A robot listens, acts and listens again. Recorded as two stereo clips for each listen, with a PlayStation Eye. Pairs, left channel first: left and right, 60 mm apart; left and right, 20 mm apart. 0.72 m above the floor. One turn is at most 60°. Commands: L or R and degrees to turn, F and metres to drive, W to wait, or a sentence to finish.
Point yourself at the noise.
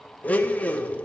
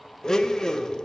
L25
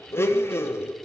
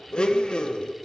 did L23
L60
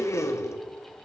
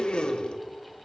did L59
L60
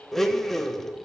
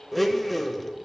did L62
Facing the blender.